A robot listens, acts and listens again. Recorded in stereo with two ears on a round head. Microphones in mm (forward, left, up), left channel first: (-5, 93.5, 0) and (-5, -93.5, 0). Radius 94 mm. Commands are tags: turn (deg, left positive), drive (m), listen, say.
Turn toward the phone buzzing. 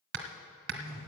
<turn deg="15"/>
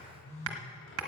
<turn deg="150"/>
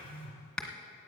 <turn deg="35"/>
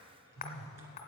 <say>Found it: a phone buzzing, straight ahead.</say>